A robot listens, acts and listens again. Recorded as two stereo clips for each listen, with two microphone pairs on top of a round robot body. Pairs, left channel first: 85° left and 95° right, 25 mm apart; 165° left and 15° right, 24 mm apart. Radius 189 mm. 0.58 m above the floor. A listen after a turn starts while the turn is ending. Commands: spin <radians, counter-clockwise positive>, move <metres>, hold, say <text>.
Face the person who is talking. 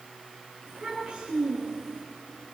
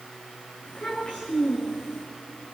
spin -2.71
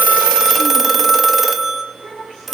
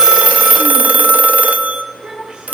spin -1.13
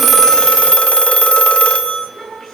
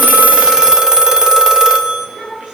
say Found it: a child speaking, straight ahead, over 4 m away.